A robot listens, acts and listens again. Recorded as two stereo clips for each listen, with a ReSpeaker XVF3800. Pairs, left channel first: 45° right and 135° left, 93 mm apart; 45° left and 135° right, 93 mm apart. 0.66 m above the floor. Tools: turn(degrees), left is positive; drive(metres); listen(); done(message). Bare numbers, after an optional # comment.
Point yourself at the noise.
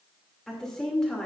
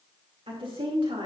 # The woman speaking: 130° right.
turn(-130)
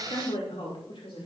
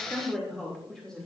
# The woman speaking is now 40° right.
turn(-40)
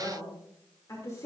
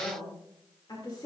done("Found it: a woman speaking, straight ahead.")